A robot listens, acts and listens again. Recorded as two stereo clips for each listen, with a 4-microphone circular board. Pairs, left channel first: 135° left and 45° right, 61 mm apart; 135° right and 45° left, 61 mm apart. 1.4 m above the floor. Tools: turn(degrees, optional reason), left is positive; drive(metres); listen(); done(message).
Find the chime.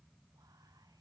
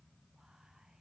listen()
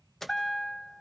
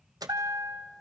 turn(degrees=50, reason="The chime: 50° left.")
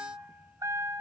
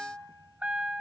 turn(degrees=-25, reason="The chime is now 25° right.")
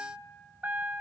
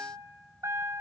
turn(degrees=15, reason="The chime is now 15° left.")
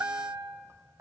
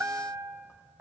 done("Facing the chime, 1 to 2 m away.")